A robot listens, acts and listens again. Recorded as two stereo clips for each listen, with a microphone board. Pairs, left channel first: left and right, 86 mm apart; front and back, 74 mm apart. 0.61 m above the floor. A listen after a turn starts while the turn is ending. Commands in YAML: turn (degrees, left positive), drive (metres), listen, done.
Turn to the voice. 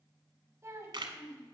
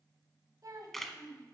turn: -145
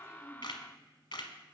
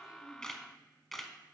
listen: true
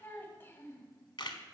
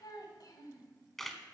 turn: 25
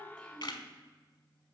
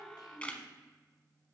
listen: true
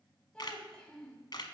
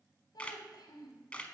turn: 10
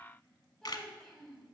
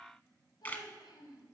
done: "Facing the child speaking."